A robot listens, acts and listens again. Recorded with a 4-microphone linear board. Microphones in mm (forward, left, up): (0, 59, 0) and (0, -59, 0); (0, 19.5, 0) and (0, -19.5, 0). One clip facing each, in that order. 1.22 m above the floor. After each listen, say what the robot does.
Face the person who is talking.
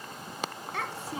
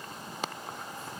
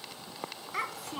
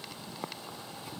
Turn 90° left.
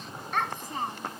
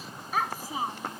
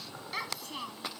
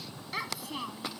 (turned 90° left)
Turn 10° right.
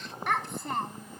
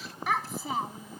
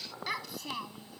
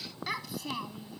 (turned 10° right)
Facing the child speaking.